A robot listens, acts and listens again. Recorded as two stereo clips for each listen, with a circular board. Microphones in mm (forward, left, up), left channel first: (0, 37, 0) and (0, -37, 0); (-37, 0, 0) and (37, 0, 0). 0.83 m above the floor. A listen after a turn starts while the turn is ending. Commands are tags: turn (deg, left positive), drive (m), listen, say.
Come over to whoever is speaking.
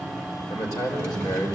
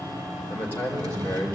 <turn deg="120"/>
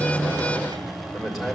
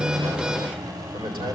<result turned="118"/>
<drive m="1.0"/>
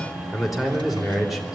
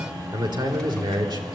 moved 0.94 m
<drive m="1.0"/>
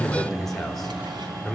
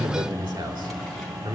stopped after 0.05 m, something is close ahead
<say>Blocked. The man speaking is further on, straight ahead.</say>